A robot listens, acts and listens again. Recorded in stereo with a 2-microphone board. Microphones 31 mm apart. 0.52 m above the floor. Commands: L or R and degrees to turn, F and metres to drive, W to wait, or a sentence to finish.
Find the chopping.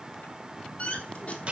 W
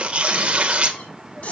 W
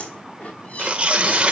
I can't make out chopping, only tearing paper and a squeak.